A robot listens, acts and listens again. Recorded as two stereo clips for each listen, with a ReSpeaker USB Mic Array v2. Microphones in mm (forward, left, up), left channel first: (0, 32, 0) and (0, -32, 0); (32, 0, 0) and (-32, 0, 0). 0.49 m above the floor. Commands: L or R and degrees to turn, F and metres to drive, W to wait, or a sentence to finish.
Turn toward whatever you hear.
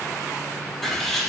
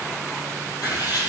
Facing the writing.